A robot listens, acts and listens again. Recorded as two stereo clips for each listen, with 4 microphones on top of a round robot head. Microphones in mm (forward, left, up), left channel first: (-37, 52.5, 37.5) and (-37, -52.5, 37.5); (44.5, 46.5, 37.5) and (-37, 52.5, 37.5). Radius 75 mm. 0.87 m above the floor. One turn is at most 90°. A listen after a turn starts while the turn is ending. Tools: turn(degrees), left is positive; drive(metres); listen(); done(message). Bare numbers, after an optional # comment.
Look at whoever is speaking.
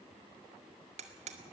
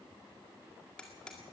listen()
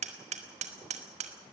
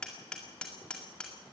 listen()
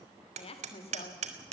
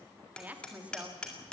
# The woman speaking: 105° left.
turn(90)
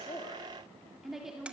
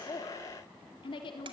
done("Facing the woman speaking, 2 to 4 m away.")